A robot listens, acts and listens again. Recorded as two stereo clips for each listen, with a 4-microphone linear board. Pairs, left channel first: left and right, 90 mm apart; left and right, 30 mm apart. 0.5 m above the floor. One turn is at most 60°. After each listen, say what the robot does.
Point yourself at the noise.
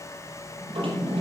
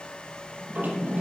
Turn 60° right.
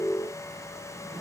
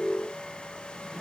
Keep listening.
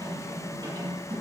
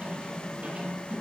Turn 55° right.
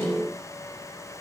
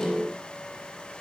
Keep listening.
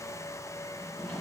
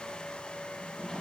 Turn 10° left.
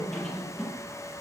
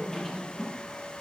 Facing the drawer.